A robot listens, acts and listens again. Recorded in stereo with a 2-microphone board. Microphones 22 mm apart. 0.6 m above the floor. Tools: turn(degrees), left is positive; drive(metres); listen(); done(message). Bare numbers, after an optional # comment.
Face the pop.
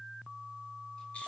listen()
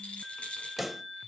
turn(-30)
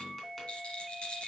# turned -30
listen()
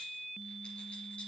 done("I heard a pop, but can't make it out now. It was about 25° left or 145° right.")